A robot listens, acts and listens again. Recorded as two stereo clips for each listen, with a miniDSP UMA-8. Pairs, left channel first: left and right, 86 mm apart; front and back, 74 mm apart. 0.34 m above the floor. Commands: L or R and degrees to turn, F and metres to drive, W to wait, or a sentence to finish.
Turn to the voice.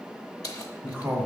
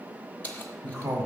R150
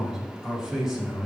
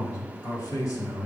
R10
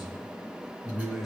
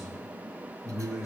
Facing the man speaking.